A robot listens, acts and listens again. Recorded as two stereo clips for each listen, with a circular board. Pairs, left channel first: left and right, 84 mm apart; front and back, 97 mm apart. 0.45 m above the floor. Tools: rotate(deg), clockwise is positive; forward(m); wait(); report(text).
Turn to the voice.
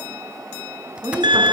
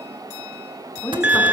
rotate(65)
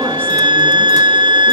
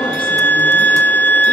wait()
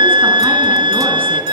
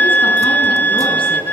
wait()
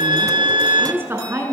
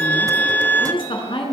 rotate(30)
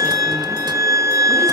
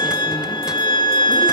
wait()
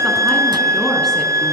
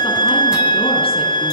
wait()
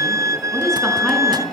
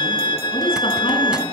report("Facing the woman speaking.")